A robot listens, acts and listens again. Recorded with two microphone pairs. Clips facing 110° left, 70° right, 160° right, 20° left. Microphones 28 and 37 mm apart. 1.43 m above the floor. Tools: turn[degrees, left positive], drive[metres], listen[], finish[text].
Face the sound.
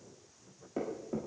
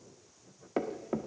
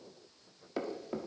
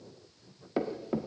Thought: The thud: 55° right.
Action: turn[-55]
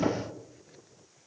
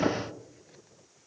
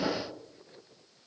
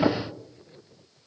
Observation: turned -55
Action: finish[Found it: a thud, straight ahead, 1 to 2 m away.]